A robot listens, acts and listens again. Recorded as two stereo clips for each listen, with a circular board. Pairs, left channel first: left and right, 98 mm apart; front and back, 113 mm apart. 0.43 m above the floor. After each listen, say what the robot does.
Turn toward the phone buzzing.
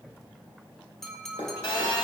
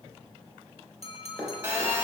Turn 110° left.
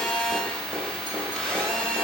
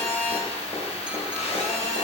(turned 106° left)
Found it: a phone buzzing, straight ahead, 1 to 2 m away.